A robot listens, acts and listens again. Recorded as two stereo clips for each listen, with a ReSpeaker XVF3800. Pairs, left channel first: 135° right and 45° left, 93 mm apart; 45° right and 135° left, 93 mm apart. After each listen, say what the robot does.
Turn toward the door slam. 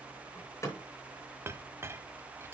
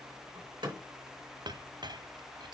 Turn 165° left.
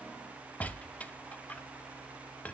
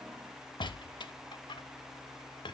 Facing where the door slam came from. I can't hear it now.